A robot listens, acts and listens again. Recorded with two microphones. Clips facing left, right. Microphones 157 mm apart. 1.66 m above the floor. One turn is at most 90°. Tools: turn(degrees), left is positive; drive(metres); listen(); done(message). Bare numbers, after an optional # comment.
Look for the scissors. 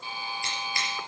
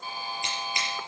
# The scissors: about 20° right or 160° right.
turn(-20)
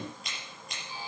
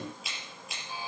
done("Facing the scissors.")